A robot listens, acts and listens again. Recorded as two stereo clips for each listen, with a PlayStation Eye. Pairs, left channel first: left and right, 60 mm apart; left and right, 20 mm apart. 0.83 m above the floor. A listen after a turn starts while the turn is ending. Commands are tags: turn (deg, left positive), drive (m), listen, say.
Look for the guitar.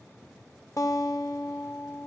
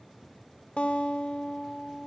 <turn deg="70"/>
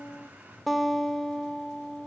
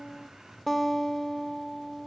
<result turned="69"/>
<say>Facing the guitar, 1 to 2 m away.</say>